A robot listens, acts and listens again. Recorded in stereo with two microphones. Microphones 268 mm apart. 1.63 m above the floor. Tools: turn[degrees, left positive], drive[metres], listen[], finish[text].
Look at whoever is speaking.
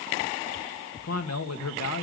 Thought: The man speaking: about 70° left or 110° left.
Action: turn[70]
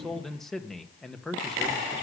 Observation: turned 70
Action: finish[Facing the man speaking, 1 to 2 m away.]